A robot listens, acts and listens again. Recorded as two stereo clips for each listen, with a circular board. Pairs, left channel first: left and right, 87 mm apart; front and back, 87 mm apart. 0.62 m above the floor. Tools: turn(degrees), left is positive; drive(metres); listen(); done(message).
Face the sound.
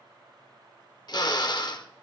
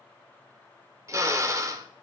turn(degrees=125)
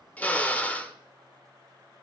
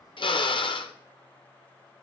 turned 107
turn(degrees=20)
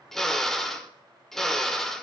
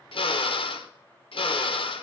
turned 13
done("Found it: a drill, straight ahead, under 1 m away.")